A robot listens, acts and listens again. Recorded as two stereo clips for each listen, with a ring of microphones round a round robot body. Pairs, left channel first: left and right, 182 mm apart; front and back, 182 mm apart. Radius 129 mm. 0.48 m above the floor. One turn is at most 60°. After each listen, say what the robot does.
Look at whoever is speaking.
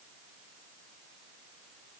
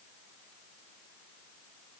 Keep listening.
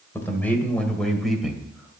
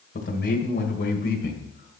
Facing the man speaking.